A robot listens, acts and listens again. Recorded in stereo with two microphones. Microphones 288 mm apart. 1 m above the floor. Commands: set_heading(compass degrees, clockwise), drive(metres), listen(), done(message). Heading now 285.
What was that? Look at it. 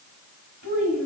set_heading(195)
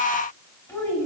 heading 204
done("Facing the child speaking.")